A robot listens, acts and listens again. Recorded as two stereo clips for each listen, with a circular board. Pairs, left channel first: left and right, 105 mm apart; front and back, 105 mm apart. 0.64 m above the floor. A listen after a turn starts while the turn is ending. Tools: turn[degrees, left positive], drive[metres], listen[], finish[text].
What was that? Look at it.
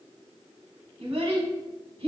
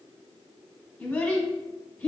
Thought: The child speaking: 70° right.
Action: turn[-70]
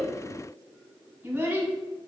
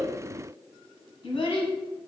Thought: The child speaking is now 20° right.
Action: turn[-20]
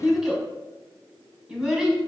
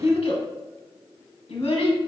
Action: finish[Found it: a child speaking, straight ahead, under 1 m away.]